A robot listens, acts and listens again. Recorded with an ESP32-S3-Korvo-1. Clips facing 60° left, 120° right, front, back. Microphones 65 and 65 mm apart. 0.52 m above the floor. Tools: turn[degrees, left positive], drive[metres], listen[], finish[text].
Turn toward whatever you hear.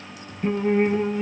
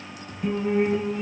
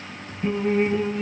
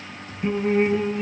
Thought: The singing: 105° left.
Action: turn[105]
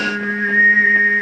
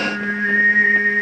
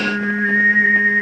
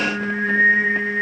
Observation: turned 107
Thought: The singing is now 10° right.
Action: turn[-10]
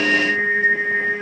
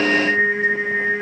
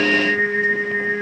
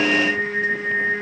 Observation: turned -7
Action: finish[Found it: singing, straight ahead.]